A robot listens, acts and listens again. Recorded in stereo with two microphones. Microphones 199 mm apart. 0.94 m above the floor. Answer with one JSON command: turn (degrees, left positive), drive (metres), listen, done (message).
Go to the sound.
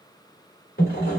{"turn": 55}
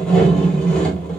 {"drive": 1.0}
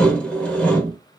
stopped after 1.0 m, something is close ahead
{"done": "Arrived at the sawing, straight ahead."}